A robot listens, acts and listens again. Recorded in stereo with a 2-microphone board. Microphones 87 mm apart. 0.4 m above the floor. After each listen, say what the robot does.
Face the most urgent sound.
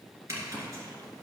Keep listening.
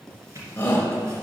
Turn 25° left.
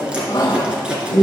Turn 125° left.
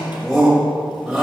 Facing the shout.